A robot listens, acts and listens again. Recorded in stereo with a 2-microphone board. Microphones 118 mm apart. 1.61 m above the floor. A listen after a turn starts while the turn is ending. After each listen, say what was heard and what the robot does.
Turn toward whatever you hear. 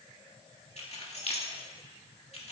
The keys jangling: about 60° left or 120° left. Turn 60° left.
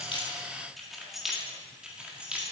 So it is at 10° right. Turn 10° right.
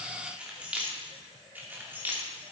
The keys jangling is now 20° right. Turn 20° right.
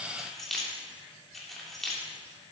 Found it: keys jangling, straight ahead, 2 to 4 m away.